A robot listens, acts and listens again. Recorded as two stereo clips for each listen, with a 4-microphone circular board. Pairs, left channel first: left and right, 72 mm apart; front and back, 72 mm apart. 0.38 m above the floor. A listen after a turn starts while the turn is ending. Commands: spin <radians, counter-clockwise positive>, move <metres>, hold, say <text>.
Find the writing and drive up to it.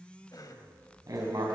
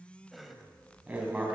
spin -1.92
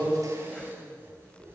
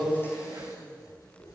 spin -0.52
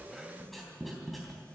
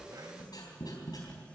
move 1.0
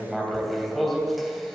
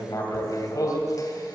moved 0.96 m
move 1.0
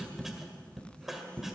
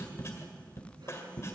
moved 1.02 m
move 1.0
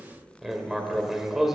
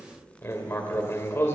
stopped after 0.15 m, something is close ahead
say I am next to the writing.